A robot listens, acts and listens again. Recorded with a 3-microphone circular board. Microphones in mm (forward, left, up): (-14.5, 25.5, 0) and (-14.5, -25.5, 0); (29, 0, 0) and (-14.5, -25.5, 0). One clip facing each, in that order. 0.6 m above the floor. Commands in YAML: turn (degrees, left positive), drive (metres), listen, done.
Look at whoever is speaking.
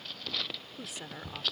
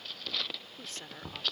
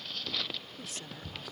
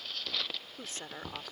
turn: 165
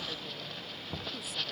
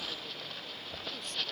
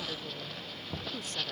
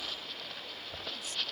listen: true
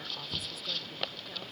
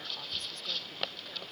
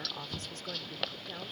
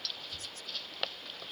listen: true
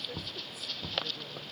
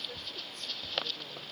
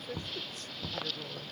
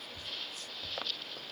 done: "I heard a woman speaking from this way, but can't make it out now."